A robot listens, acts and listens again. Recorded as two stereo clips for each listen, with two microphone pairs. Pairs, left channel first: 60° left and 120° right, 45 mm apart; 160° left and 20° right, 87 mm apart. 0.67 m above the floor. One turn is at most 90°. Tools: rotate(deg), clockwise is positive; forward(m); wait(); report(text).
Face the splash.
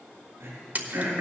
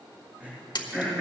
rotate(90)
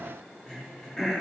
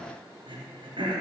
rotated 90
rotate(80)
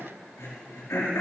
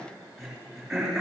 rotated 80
report("I heard a splash from this way, but can't make it out now.")